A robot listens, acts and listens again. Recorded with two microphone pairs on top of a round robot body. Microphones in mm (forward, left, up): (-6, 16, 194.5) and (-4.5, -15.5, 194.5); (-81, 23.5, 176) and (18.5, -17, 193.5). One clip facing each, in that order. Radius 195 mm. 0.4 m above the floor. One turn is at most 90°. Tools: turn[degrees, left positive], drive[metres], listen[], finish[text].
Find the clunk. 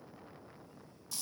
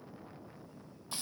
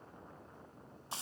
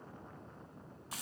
Action: listen[]
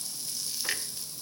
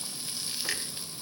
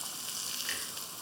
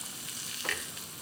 Thought: The clunk: 10° left.
Action: turn[10]
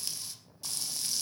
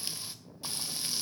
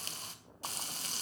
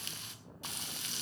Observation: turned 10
Action: finish[Facing where the clunk came from. I can't hear it now.]